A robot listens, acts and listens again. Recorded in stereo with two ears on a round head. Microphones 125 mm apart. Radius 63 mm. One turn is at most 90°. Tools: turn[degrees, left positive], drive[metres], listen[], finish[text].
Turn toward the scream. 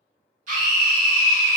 Thought: The scream: about 60° right or 120° right.
Action: turn[-60]
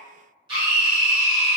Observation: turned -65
Thought: So it is at 40° right.
Action: turn[-40]
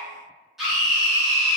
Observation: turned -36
Action: finish[Found it: a scream, straight ahead, 1 to 2 m away.]